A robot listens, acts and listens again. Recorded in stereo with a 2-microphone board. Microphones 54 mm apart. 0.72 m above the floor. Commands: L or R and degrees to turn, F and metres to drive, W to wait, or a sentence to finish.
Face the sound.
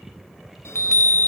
L55
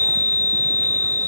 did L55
L55
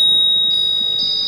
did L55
Found it: a chime, straight ahead, under 1 m away.